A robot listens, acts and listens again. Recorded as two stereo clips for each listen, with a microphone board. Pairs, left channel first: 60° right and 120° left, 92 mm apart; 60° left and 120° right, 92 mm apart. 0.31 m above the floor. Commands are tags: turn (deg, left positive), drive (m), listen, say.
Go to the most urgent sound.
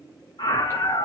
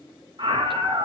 <turn deg="-90"/>
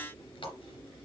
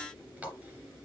<listen/>
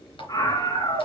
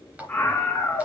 <turn deg="-10"/>
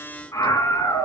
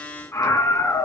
<drive m="1.0"/>
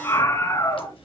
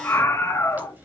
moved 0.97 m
<drive m="1.0"/>
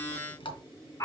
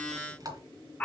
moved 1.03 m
<turn deg="-10"/>
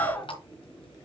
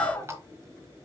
<drive m="1.0"/>
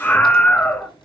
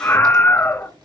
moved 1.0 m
<drive m="1.0"/>
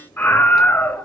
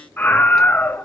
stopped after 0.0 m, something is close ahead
<say>Arrived at the scream, straight ahead.</say>